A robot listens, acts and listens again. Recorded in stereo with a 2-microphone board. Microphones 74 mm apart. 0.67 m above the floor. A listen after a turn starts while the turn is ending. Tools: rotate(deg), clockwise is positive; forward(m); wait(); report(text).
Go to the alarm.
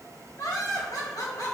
wait()
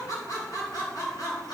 wait()
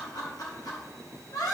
report("I can't make out an alarm, only laughter.")